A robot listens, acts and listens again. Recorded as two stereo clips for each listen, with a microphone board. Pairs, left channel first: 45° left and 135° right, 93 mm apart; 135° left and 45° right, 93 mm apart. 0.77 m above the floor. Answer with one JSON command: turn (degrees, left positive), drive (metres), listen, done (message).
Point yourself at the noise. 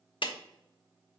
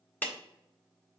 {"turn": 65}
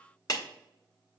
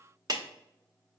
{"done": "Facing the clap."}